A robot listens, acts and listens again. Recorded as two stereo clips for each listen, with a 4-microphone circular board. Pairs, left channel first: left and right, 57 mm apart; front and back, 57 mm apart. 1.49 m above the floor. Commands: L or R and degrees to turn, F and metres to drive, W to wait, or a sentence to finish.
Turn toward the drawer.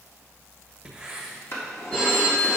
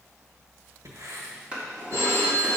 L115
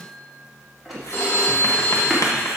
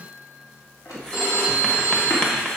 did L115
Found it: a drawer, straight ahead.